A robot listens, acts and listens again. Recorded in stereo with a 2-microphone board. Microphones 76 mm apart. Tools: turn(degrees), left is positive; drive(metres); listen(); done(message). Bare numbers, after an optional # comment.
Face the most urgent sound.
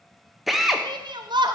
# The shout: about 75° right or 105° right.
turn(-75)
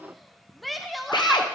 done("Found it: a shout, straight ahead, under 1 m away.")